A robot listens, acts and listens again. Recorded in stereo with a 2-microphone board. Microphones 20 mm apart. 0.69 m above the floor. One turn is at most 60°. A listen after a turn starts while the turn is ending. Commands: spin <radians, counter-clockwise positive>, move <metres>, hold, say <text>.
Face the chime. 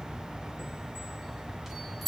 spin -0.52
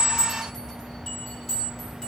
spin 0.35
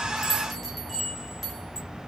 say Found it: a chime, straight ahead.